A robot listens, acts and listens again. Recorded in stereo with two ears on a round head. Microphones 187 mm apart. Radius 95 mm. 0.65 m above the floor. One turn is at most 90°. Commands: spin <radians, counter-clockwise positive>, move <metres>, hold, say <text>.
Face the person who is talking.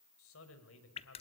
spin 1.31
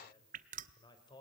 spin 0.35
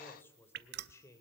spin 0.26
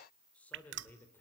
spin 0.17
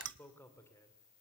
spin 0.26
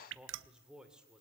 say Found it: a man speaking, straight ahead.